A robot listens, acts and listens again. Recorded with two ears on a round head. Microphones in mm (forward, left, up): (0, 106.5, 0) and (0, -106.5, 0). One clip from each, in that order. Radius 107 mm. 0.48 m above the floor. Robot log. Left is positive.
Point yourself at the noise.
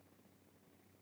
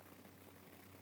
cmd idle
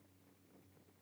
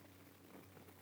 cmd idle
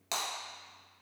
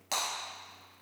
cmd yaw +30
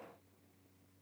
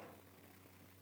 cmd idle
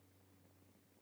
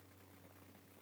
end: I heard breaking glass, but can't make it out now. It was about 15° right or 135° left.